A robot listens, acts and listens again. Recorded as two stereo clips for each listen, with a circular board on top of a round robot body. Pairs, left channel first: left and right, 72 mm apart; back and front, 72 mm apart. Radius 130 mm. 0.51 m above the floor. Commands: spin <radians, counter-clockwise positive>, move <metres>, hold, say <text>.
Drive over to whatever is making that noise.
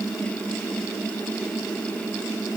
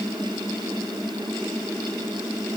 hold
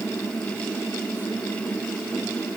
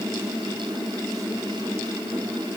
hold
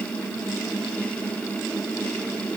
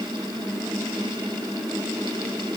say I can't make out anything.